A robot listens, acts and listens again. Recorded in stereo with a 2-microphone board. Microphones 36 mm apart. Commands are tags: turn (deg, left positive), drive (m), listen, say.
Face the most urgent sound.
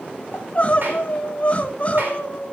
<turn deg="40"/>
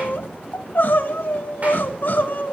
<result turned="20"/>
<turn deg="120"/>
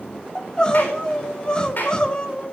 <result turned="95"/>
<turn deg="25"/>
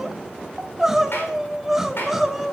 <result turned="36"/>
<turn deg="-10"/>
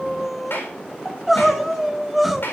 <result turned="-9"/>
<say>Facing the crying, 1 to 2 m away.</say>